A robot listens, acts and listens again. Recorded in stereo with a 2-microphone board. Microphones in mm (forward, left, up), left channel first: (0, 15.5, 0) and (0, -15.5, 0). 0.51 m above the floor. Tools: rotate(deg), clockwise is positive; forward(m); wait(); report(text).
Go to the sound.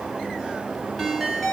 rotate(-30)
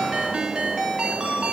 rotate(25)
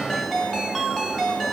forward(1.0)
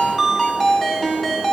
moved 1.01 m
rotate(-10)
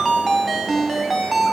forward(1.0)
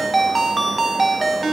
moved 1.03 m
forward(1.0)
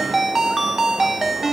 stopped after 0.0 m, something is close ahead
report("Arrived at the ringtone, straight ahead.")